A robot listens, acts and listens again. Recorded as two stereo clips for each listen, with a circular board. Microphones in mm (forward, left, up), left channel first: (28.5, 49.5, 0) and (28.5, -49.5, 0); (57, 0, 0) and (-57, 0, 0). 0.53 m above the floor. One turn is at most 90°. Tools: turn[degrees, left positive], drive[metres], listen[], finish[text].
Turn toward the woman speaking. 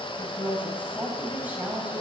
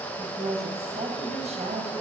Thought: The woman speaking: 165° right.
Action: turn[-90]
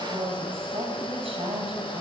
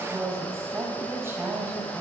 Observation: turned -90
Thought: The woman speaking is now 110° right.
Action: turn[-90]
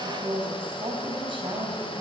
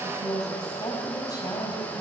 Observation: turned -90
Thought: The woman speaking is now 55° right.
Action: turn[-55]
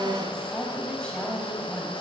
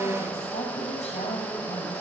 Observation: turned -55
Thought: The woman speaking is now 10° left.
Action: turn[10]
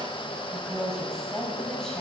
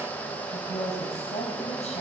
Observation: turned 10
Action: finish[Found it: a woman speaking, straight ahead.]